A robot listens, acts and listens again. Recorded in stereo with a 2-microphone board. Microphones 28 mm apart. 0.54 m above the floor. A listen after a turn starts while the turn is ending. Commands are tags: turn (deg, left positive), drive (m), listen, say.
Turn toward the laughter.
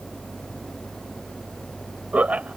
<turn deg="-60"/>
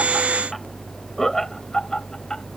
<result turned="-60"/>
<turn deg="15"/>
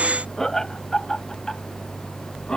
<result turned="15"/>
<turn deg="20"/>
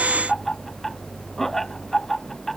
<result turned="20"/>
<turn deg="10"/>
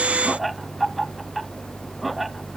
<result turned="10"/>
<say>Found it: laughter, straight ahead.</say>